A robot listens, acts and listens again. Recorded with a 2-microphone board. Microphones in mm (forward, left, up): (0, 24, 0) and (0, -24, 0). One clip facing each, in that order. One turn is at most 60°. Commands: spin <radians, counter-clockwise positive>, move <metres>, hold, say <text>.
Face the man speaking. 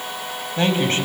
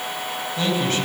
spin 0.70
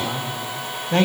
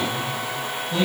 spin 1.05
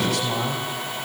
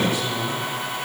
spin 1.05
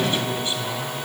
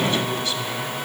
spin 0.35
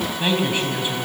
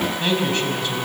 spin 0.26
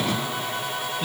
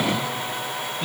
say Found it: a man speaking, straight ahead.